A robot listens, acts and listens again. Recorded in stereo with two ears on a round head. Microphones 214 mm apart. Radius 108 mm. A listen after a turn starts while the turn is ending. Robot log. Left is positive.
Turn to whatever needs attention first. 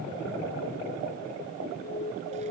note: The alarm: about 30° left or 150° left.
cmd yaw +30
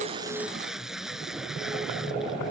cmd idle
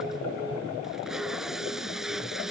cmd idle
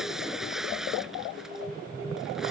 end: I heard an alarm, but can't make it out now. It was about straight ahead or 120° left.